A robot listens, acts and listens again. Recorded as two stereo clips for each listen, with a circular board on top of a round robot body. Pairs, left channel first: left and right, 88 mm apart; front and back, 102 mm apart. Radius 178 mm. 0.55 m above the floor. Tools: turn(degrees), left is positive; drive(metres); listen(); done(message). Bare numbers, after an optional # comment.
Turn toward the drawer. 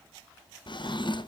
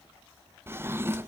# The drawer: 115° left.
turn(115)
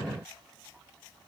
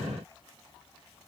listen()
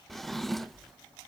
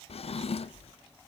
done("Found it: a drawer, straight ahead, 1 to 2 m away.")